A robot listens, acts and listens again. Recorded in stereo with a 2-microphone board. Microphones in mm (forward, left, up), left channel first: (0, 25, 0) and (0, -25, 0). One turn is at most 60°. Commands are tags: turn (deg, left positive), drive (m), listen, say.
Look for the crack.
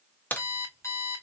<turn deg="35"/>
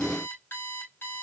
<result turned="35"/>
<listen/>
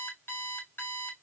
<say>I heard a crack, but can't make it out now. It was about straight ahead or 110° left.</say>